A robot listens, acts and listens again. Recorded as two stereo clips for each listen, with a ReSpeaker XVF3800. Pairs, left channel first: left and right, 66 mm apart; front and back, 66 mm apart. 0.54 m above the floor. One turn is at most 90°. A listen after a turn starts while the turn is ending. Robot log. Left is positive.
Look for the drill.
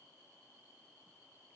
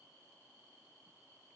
cmd idle
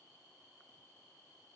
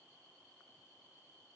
cmd idle
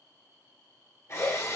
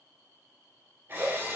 note: The drill: 125° left.
cmd yaw +90
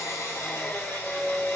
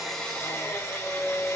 note: The drill is now 40° left.
cmd yaw +40
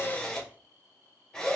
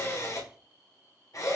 note: The drill is now 10° left.
cmd yaw +10
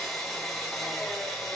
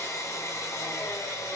end: Facing the drill.